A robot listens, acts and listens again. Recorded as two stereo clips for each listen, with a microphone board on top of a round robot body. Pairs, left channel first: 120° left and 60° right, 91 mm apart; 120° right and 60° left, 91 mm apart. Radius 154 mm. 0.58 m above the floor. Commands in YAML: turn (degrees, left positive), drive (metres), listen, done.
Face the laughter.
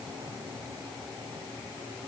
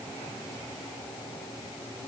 listen: true
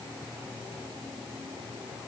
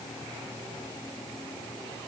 listen: true
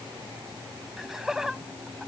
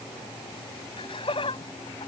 turn: -145
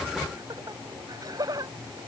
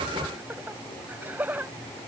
turn: -10
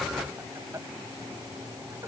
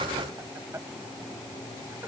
listen: true
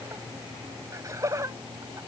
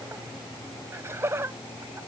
done: "Found it: laughter, straight ahead."